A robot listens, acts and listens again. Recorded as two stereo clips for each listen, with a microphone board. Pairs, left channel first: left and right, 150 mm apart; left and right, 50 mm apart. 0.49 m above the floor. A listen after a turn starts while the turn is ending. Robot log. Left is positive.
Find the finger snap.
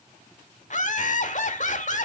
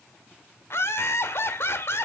cmd idle
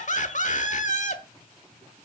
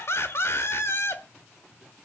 cmd idle
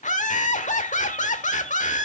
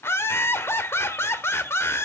end: I can't make out a finger snap, only laughter.